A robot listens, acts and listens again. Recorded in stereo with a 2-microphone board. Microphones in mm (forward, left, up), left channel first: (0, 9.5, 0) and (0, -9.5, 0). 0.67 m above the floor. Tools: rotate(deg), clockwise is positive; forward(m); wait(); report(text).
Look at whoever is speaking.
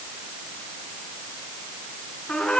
wait()
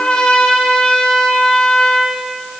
wait()
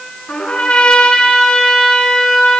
report("I can't make out anyone speaking to turn to.")